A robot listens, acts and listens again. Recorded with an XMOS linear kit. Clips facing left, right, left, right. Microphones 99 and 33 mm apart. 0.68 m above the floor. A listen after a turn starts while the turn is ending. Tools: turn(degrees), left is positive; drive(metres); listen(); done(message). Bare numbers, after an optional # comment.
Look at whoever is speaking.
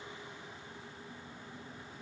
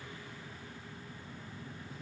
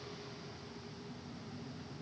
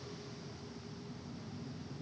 listen()
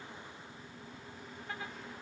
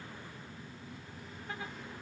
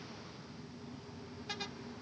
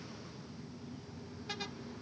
listen()
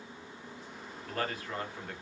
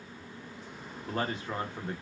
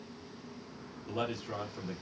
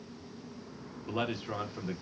# The man speaking: about 25° right or 155° right.
turn(-25)
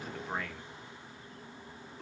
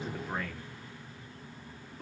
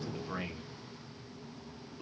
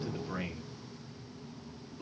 done("Facing the man speaking, under 1 m away.")